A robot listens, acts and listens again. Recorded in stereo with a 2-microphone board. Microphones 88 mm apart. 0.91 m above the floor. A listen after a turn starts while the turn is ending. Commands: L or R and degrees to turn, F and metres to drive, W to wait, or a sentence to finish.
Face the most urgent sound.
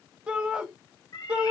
R30
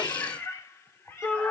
L15
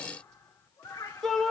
Found it: a shout, straight ahead.